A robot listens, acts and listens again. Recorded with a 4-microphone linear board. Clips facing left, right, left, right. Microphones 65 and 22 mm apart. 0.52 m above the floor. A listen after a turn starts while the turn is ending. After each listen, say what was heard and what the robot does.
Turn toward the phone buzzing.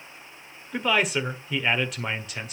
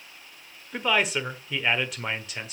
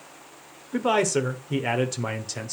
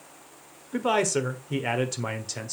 Keep listening.
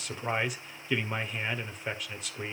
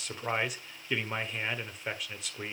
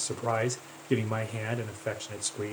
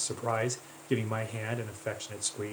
Keep listening.
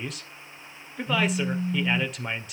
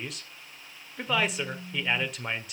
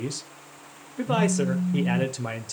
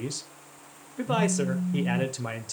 The phone buzzing: about 55° left or 125° left. Turn 55° left.
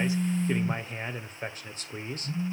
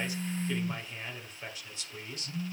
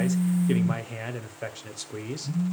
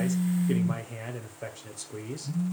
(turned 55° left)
So it is at 25° left. Turn 25° left.
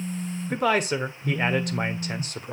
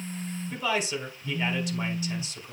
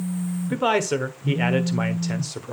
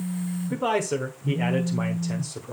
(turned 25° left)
Found it: a phone buzzing, straight ahead.